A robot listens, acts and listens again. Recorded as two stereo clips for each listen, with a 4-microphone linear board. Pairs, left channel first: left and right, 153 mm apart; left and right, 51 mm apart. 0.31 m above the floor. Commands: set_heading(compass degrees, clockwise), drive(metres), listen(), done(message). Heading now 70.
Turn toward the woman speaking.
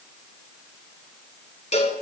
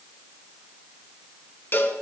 listen()
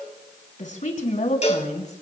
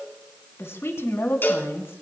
set_heading(20)
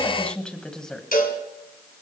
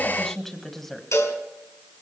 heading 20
done("Facing the woman speaking, 2 to 4 m away.")